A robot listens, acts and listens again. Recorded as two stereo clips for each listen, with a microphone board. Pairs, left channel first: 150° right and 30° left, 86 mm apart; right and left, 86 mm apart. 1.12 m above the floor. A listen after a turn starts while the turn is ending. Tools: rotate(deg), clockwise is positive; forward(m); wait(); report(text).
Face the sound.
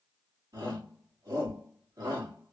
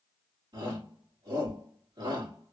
rotate(-75)
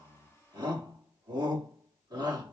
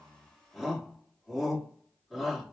report("Facing the shout.")